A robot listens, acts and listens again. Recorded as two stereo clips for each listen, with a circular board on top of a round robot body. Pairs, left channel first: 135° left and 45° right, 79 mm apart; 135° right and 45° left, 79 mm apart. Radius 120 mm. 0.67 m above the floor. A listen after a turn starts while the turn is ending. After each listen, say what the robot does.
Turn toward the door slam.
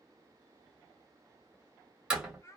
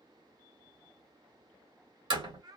Turn 35° left.
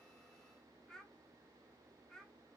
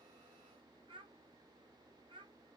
I heard a door slam from this way, but can't make it out now.